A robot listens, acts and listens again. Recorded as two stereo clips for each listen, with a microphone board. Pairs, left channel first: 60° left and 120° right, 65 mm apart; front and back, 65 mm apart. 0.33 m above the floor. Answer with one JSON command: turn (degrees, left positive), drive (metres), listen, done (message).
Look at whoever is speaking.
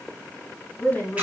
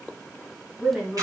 {"turn": 120}
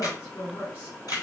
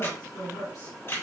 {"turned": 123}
{"done": "Found it: a woman speaking, straight ahead, 2 to 4 m away."}